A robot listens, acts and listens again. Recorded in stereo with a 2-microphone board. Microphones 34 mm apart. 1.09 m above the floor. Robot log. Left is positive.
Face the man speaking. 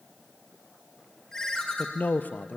note: The man speaking: about 60° left or 120° left.
cmd yaw +60
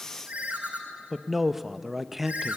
end: Facing the man speaking, under 1 m away.